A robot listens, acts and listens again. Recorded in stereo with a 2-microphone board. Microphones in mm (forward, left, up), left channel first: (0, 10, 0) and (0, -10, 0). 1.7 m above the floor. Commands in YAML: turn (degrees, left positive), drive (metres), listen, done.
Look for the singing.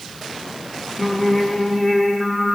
turn: 30
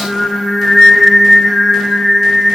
turn: 30
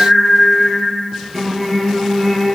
turn: 30
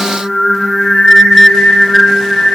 turn: 150
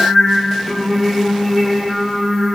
done: "Found it: singing, straight ahead."